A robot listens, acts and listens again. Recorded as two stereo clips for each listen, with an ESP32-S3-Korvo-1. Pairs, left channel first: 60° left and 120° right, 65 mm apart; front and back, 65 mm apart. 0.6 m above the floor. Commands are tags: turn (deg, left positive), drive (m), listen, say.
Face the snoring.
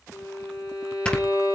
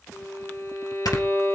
<turn deg="-15"/>
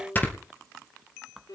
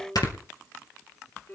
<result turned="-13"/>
<say>Found it: snoring, straight ahead.</say>